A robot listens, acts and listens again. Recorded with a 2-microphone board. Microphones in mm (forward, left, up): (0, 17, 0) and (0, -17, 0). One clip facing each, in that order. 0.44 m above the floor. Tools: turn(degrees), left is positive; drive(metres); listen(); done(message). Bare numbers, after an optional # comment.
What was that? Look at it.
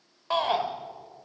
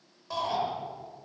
# The shout: about 50° left or 130° left.
turn(50)
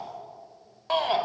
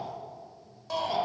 # So it is at 60° left.
turn(60)
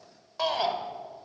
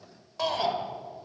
# The shout is now 10° left.
turn(10)
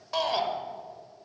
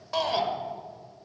done("Found it: a shout, straight ahead.")